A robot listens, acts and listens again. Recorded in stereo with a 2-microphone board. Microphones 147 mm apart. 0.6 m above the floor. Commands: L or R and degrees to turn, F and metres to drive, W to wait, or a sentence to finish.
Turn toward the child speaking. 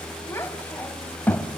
L30
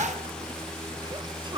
W
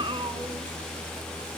R35
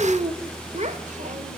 R50
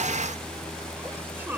W
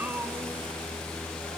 R15
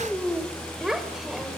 Found it: a child speaking, straight ahead.